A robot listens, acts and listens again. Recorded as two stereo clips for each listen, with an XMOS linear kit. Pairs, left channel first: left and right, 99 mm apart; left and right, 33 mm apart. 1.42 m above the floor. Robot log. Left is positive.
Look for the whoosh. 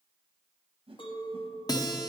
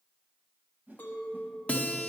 note: The whoosh: about 65° right or 115° right.
cmd yaw -65
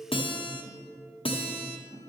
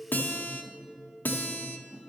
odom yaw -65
cmd idle
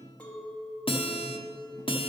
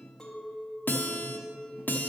cmd idle
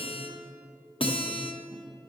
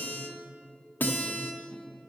end: I heard a whoosh, but can't make it out now. It was about straight ahead or 50° right.